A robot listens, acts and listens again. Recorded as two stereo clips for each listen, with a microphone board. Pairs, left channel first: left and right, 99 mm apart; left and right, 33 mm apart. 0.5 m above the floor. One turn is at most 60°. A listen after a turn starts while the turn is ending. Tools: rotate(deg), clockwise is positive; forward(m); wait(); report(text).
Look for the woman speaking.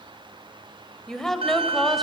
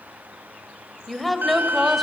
rotate(-30)
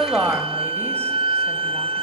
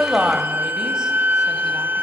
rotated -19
wait()
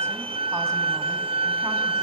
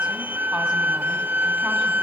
wait()
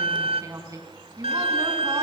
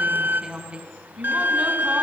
rotate(35)
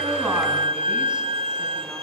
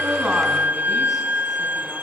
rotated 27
wait()
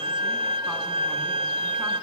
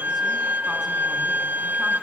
wait()
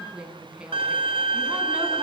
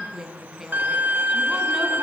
rotate(10)
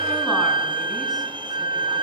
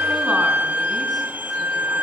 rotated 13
wait()
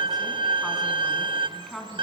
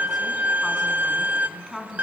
report("Found it: a woman speaking, straight ahead, over 4 m away.")